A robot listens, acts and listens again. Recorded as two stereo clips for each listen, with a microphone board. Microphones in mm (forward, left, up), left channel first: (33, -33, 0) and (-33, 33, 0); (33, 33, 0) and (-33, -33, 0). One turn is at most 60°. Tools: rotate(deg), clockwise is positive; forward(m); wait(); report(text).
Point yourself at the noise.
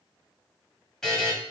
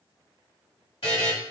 rotate(-40)
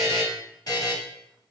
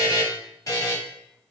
report("Facing the buzzer.")